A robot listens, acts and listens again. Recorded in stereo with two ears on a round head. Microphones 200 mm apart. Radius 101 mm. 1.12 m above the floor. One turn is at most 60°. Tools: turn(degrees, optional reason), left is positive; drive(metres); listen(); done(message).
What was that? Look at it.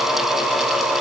listen()
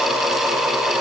listen()
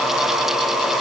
done("I can't make out anything to turn to.")